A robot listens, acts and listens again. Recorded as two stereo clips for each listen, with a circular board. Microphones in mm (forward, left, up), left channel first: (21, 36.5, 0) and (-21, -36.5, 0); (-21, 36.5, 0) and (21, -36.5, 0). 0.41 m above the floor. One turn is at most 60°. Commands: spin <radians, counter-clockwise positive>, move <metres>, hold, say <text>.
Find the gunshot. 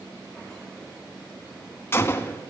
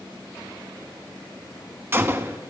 say Facing the gunshot.